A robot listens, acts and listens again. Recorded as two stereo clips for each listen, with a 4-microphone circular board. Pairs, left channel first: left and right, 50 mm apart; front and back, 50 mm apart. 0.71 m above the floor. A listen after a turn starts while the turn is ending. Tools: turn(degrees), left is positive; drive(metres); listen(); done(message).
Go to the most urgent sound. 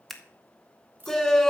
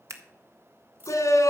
turn(degrees=10)
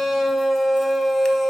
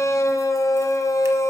drive(metres=1.0)
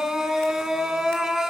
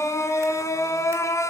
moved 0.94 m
drive(metres=1.0)
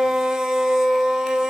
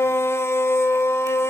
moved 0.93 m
turn(degrees=-15)
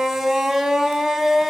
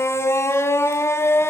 drive(metres=1.0)
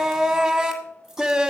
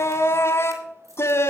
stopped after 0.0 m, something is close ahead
turn(degrees=-10)
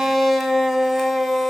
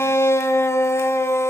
done("Arrived at the shout, straight ahead.")